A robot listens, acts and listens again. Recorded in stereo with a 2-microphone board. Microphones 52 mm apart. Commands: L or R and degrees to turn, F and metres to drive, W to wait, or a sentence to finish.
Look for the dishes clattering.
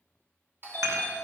R90
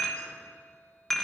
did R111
L10
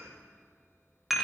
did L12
Found it: dishes clattering, straight ahead, 1 to 2 m away.